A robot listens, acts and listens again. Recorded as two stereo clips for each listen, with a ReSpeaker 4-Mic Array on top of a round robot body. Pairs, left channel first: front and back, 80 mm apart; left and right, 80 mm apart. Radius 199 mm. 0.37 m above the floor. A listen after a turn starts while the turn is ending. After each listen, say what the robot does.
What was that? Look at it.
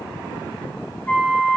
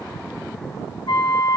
Turn 65° left.
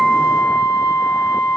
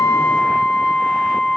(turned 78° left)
Turn 10° right.
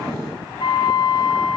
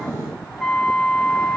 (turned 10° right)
Found it: a flute, straight ahead.